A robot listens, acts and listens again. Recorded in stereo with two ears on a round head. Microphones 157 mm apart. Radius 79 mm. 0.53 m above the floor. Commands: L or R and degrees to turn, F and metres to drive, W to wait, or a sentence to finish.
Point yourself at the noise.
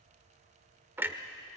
R30
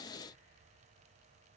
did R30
W
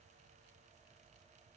I heard a clunk, but can't make it out now. It was about 15° left or 135° right.